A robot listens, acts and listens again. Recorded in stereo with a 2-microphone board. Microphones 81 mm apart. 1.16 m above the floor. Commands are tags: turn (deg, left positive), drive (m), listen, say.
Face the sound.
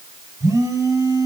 <turn deg="-45"/>
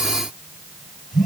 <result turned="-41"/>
<say>Facing the phone buzzing, over 4 m away.</say>